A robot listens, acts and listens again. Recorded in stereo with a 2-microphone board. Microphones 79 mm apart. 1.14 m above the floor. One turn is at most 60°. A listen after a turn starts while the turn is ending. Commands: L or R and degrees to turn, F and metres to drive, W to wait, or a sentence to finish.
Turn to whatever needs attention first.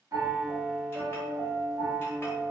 W
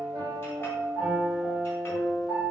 W
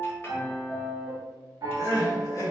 L45
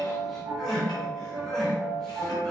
L10
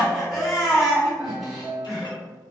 Found it: crying, straight ahead.